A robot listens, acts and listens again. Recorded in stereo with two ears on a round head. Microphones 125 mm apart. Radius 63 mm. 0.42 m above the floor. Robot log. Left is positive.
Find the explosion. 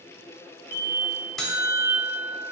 note: The explosion: about 65° left or 115° left.
cmd yaw +65
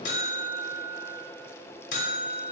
cmd idle
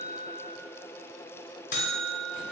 end: I heard an explosion, but can't make it out now. It was about straight ahead or 50° left.